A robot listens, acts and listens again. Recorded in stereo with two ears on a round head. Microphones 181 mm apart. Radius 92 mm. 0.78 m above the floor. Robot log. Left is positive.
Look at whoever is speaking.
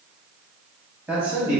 cmd yaw -30
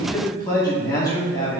note: So it is at 20° left.
cmd yaw +20
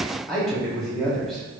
end: Facing the man speaking.